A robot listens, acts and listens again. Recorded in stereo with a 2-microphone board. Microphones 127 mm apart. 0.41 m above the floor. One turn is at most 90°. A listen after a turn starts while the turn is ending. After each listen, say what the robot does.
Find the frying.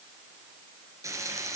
Turn 25° right.
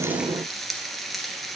Facing the frying.